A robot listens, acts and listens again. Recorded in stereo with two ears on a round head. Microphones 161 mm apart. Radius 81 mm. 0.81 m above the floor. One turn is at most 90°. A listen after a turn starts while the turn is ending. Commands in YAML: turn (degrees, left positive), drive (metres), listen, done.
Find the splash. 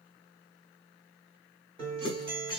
turn: 25
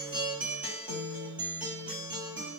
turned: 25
listen: true
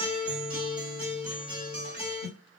done: "I heard a splash, but can't make it out now. It was about straight ahead or 130° left."